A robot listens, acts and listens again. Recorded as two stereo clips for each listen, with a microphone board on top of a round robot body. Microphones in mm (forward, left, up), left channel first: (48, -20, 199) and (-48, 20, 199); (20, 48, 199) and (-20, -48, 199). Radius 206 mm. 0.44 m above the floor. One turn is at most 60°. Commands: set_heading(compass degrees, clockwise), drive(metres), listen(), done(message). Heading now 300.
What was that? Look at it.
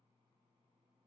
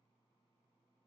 listen()
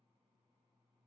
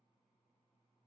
listen()
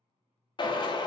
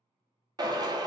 set_heading(0)
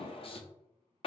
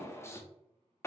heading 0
done("Found it: a drill, straight ahead.")